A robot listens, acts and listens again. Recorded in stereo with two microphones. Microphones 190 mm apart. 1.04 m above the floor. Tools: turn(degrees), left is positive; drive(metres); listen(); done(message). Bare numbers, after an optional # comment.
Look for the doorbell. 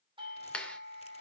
# The doorbell: about 30° right or 150° right.
turn(-30)
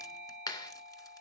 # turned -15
# So it is at 15° right.
turn(-15)
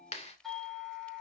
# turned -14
done("Facing the doorbell, over 4 m away.")